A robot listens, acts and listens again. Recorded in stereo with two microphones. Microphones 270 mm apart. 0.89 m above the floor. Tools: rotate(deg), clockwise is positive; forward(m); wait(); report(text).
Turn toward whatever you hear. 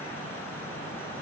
wait()
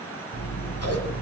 rotate(-65)
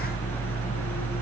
report("Found it: scissors, straight ahead.")